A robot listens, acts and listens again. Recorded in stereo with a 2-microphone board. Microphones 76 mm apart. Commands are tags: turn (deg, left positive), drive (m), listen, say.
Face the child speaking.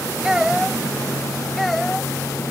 <turn deg="30"/>
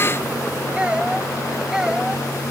<turn deg="-30"/>
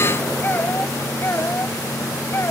<turn deg="35"/>
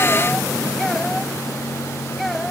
<say>Found it: a child speaking, straight ahead.</say>